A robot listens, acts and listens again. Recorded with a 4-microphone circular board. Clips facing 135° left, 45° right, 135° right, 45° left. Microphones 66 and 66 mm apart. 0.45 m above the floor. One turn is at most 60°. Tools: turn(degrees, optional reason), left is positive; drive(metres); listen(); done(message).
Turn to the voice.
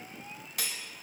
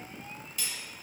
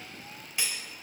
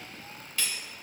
listen()
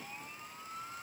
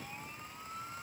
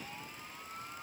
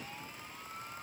listen()
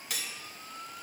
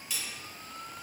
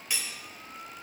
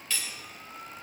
done("I can't make out anyone speaking to turn to.")